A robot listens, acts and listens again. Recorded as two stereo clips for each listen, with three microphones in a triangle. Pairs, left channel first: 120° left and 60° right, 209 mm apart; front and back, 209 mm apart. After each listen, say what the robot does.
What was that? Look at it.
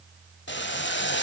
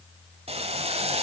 Turn 125° left.
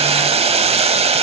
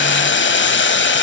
Found it: boiling, straight ahead.